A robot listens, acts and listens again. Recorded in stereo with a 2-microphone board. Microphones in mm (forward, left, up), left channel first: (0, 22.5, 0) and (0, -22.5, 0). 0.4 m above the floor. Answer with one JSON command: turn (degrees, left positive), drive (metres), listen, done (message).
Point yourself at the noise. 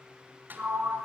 {"turn": -50}
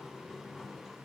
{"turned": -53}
{"done": "Found it: a sliding door, straight ahead."}